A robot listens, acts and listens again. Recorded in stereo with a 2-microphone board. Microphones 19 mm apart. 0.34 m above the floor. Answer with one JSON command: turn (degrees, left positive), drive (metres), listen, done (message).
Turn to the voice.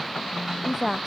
{"turn": -30}
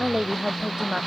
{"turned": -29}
{"turn": -140}
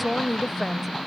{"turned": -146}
{"done": "Facing the woman speaking."}